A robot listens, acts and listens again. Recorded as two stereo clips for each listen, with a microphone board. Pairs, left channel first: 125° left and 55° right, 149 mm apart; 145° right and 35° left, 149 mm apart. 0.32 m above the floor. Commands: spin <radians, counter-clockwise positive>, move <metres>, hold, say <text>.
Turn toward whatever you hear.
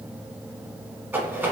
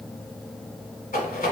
spin -2.36
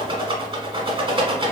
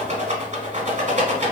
say Found it: a rattle, straight ahead, under 1 m away.